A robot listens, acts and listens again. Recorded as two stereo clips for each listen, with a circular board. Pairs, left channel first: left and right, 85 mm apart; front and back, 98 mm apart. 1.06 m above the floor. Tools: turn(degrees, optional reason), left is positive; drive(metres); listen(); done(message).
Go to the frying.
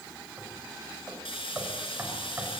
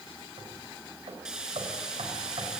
turn(degrees=95, reason="The frying: 95° left.")
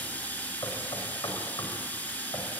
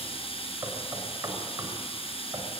turn(degrees=15, reason="The frying is now 15° left.")
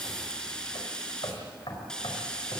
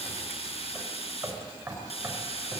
turn(degrees=10, reason="The frying is now 10° left.")
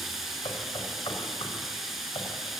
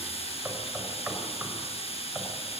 drive(metres=1.0)
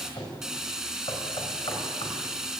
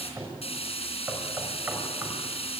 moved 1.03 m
drive(metres=1.0)
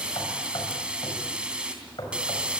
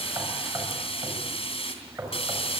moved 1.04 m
turn(degrees=-15, reason="The frying is now 15° right.")
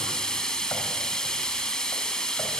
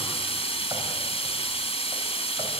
drive(metres=1.0)
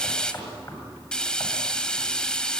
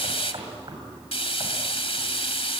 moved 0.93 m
turn(degrees=10, reason="The frying is now 10° left.")
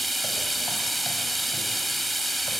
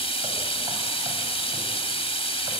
drive(metres=1.0)
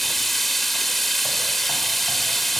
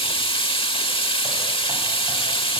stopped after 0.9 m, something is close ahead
done("Arrived at the frying, straight ahead.")